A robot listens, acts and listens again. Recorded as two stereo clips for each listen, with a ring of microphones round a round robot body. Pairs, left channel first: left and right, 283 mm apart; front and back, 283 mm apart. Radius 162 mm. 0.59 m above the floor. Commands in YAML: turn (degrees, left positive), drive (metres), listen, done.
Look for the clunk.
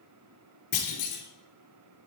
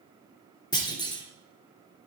turn: 75
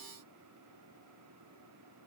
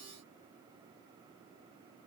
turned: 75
done: "I heard a clunk from this way, but can't make it out now."